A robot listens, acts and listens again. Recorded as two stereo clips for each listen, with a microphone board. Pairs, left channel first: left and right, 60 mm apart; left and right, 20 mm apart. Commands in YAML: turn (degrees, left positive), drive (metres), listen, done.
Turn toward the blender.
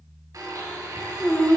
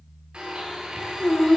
turn: -70
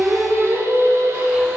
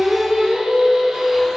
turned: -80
listen: true
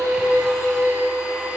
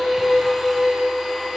listen: true
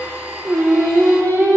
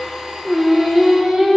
turn: -20
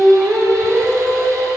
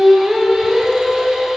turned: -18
listen: true
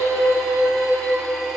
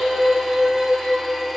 listen: true
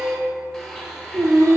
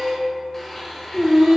done: "Found it: a blender, straight ahead, 1 to 2 m away."